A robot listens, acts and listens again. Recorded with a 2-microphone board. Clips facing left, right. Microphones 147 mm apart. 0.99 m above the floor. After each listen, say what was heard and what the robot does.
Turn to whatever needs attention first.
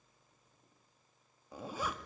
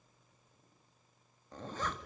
Keep listening.
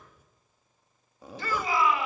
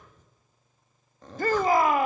The shout: about 50° right or 130° right. Turn 50° right.
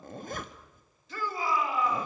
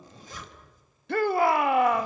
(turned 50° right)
So it is at 75° right. Turn 75° right.
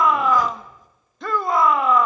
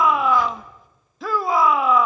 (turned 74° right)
Found it: a shout, straight ahead, 1 to 2 m away.